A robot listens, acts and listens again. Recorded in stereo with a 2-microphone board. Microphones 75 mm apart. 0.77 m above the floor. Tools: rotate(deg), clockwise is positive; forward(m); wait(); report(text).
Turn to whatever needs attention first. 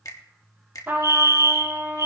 rotate(50)
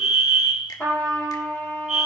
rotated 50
rotate(10)
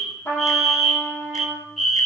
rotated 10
report("Found it: a fire alarm, straight ahead.")